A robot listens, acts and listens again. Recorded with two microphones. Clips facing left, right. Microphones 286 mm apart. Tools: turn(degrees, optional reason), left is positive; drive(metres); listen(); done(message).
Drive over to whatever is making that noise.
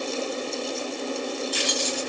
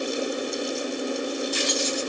turn(degrees=-50, reason="The keys jangling: about 50° right or 130° right.")
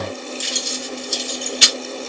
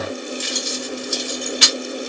turn(degrees=-75, reason="So it is at 75° right.")
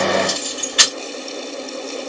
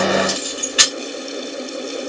drive(metres=1.0)
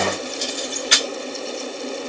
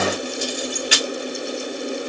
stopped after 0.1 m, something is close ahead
turn(degrees=-10, reason="The keys jangling is now 10° right.")
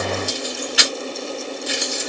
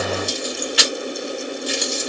done("Blocked. The keys jangling is further on, straight ahead.")